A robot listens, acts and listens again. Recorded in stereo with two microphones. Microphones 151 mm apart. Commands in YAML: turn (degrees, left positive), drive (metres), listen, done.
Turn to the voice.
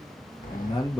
turn: 35
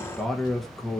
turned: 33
done: "Facing the man speaking, 1 to 2 m away."